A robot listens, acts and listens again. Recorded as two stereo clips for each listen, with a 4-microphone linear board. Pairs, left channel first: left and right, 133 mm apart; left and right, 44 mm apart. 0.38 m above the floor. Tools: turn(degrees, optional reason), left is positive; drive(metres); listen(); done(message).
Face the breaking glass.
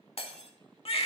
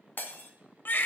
turn(degrees=50, reason="The breaking glass: about 50° left or 130° left.")
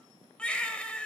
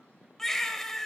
listen()
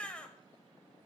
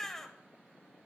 done("I heard breaking glass, but can't make it out now. It was about straight ahead or 80° left.")